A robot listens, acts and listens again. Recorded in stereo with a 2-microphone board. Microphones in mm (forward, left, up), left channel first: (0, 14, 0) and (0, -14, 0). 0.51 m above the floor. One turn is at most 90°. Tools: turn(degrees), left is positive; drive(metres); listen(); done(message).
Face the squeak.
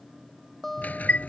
turn(degrees=90)
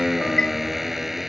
done("Facing the squeak.")